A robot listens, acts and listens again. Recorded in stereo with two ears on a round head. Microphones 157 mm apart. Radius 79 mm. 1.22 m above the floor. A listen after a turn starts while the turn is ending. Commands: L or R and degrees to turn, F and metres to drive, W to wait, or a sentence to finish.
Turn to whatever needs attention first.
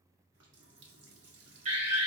R45
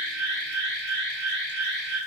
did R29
R105
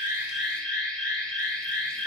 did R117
L15
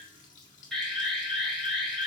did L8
Found it: an alarm, straight ahead, 2 to 4 m away.